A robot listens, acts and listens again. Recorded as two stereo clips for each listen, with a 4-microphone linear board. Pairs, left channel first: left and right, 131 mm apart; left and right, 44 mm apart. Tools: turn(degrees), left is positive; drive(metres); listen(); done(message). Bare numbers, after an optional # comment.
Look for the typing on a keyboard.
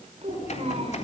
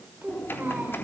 # The typing on a keyboard: about 60° left or 120° left.
turn(60)
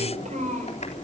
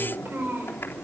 # So it is at 60° left.
turn(60)
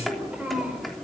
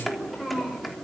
done("Found it: typing on a keyboard, straight ahead.")